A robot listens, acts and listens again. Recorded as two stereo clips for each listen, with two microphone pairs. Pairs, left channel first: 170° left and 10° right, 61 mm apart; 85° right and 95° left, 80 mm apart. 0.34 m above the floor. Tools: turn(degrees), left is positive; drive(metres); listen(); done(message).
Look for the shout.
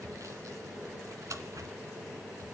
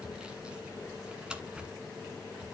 listen()
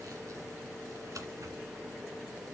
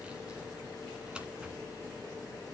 listen()
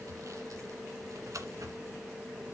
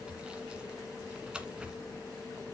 done("I can't make out a shout to turn to.")